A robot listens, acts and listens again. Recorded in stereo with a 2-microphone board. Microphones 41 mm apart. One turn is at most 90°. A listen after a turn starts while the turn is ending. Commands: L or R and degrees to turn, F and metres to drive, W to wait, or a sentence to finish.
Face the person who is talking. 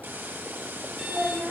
R45
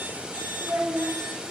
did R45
R80
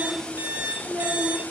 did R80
R30
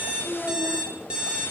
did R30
R15
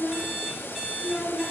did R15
Found it: a child speaking, straight ahead, over 4 m away.